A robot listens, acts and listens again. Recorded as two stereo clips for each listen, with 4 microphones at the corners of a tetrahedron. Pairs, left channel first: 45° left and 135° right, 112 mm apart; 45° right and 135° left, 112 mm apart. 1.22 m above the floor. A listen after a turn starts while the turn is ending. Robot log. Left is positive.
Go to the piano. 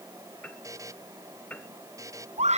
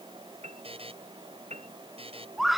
note: The piano: 120° left.
cmd yaw +120
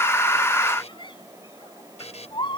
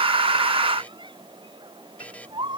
cmd idle
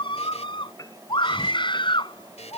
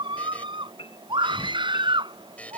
note: The piano is now 10° right.
cmd yaw -10
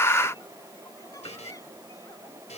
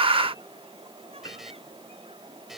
cmd idle
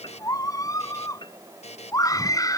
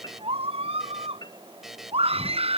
cmd fwd 1.0
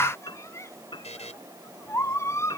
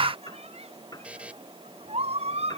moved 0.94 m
cmd fwd 1.0
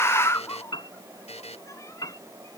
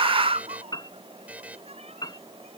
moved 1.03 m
cmd fwd 1.0
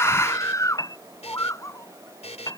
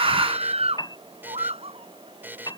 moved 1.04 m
cmd fwd 1.0
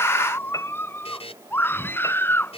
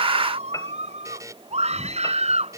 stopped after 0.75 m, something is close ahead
end: I am next to the piano.